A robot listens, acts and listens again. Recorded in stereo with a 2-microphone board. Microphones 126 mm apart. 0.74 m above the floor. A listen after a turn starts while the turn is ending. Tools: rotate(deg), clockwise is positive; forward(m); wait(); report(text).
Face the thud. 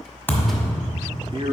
rotate(-15)
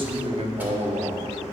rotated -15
wait()
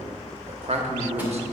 report("I heard a thud, but can't make it out now. It was about straight ahead or 150° left.")